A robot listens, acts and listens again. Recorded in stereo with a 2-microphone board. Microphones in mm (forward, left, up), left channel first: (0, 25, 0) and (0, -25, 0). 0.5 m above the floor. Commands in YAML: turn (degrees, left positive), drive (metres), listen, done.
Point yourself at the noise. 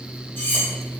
turn: 40
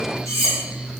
turn: 95
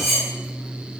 done: "Facing the cutlery clinking, 1 to 2 m away."